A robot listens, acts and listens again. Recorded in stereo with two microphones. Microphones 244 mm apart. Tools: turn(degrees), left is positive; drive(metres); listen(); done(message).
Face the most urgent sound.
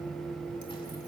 listen()
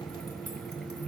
listen()
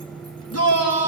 turn(degrees=90)
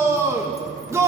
turn(degrees=-10)
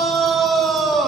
done("Found it: a shout, straight ahead.")